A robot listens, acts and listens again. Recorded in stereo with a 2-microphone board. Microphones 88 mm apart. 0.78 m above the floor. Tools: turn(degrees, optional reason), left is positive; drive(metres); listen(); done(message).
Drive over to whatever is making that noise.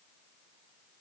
listen()
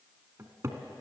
turn(degrees=-35, reason="The cupboard door: about 35° right or 145° right.")
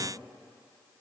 listen()
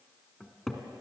drive(metres=1.0)
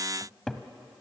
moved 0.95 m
drive(metres=1.0)
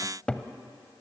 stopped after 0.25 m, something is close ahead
turn(degrees=10, reason="The cupboard door is now 10° left.")
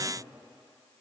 listen()
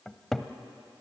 done("Arrived at the cupboard door, straight ahead.")